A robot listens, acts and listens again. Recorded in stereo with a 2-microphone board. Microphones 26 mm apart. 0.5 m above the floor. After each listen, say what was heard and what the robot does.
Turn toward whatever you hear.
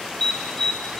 The alarm: about 55° left or 125° left. Turn 55° left.
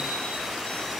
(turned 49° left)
Keep listening.
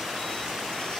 Keep listening.
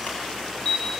So it is at 70° left. Turn 70° left.
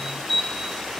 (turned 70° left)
Found it: an alarm, straight ahead.